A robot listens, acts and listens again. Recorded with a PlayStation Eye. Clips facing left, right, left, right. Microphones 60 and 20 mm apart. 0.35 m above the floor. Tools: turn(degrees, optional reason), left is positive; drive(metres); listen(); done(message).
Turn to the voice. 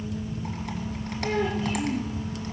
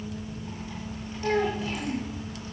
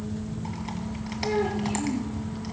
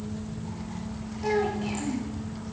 turn(degrees=-90)
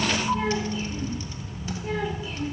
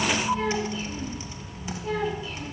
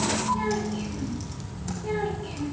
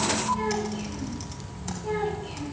turn(degrees=20, reason="So it is at 20° left.")
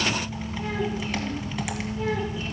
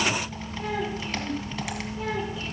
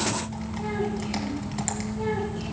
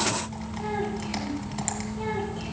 done("Facing the child speaking.")